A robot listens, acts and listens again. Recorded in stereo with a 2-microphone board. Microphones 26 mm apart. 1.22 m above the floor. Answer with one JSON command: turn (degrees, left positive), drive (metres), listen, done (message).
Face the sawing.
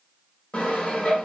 {"turn": 50}
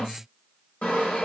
{"turn": 70}
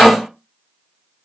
{"turn": 30}
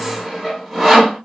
{"done": "Found it: sawing, straight ahead."}